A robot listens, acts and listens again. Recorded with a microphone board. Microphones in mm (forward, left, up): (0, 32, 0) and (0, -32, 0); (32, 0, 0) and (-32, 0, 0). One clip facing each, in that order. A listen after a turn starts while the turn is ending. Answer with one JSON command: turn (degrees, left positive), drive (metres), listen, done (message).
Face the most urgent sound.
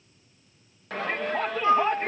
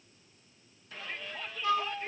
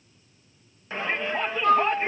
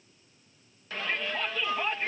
{"turn": 65}
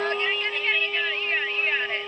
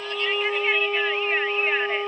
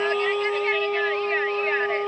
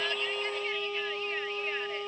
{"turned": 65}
{"listen": true}
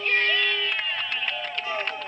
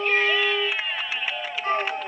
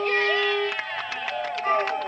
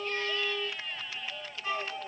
{"turn": -10}
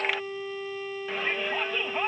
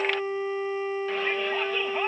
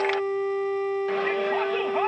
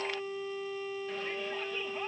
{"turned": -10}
{"listen": true}
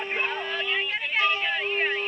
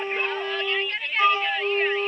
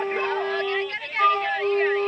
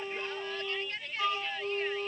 {"done": "Facing the shout."}